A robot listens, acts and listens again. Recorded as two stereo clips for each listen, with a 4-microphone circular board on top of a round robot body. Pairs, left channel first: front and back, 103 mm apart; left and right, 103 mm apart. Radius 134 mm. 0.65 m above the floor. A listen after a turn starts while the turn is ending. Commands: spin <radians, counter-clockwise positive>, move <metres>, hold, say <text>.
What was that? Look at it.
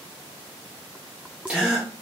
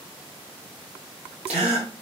spin -1.75
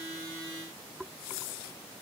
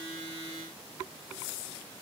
say I heard a gasp from this way, but can't make it out now.